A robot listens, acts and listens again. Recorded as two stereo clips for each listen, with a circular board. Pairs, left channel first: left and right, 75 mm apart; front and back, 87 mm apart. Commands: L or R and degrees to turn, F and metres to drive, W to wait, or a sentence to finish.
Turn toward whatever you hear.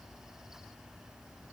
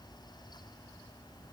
W
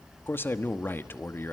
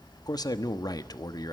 L35
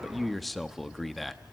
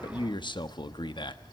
Found it: a man speaking, straight ahead, 1 to 2 m away.